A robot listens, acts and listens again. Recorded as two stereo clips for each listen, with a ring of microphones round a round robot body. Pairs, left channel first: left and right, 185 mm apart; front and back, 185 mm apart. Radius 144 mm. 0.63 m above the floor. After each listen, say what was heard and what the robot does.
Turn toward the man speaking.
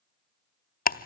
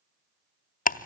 Keep listening.
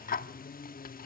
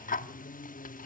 Keep listening.
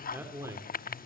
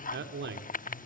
The man speaking: 165° right. Turn 165° right.
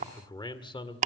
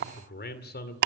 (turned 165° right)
The man speaking is now 30° left. Turn 30° left.
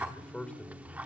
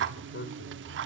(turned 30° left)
Found it: a man speaking, straight ahead, 2 to 4 m away.